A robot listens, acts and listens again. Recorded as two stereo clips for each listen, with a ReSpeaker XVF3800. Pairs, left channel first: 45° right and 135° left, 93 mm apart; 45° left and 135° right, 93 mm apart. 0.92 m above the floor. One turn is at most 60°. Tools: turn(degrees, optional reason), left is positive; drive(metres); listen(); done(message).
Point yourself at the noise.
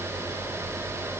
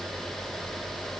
listen()
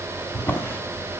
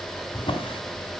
turn(degrees=20, reason="The drawer: 20° left.")
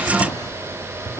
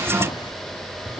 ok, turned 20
done("Found it: a drawer, straight ahead, 2 to 4 m away.")